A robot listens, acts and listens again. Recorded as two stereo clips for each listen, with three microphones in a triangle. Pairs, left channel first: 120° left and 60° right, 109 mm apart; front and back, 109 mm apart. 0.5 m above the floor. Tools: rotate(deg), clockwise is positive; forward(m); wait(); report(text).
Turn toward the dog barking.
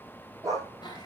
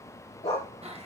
report("Facing the dog barking, over 4 m away.")